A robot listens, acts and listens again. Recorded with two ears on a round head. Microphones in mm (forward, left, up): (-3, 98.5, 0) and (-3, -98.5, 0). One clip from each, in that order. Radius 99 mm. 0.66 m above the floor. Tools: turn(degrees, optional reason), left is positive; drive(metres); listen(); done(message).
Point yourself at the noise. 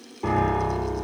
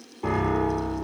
turn(degrees=30)
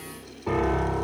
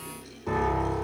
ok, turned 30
turn(degrees=150, reason="So it is at 150° left.")
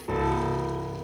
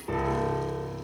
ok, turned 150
done("Found it: a piano, straight ahead, 2 to 4 m away.")